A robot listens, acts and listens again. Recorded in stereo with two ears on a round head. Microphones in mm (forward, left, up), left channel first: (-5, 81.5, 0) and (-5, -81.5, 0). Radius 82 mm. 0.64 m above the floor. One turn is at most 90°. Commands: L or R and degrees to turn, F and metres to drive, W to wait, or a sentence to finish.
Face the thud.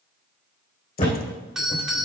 L30
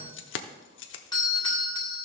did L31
W
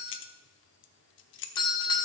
I heard a thud, but can't make it out now. It was about straight ahead or 120° left.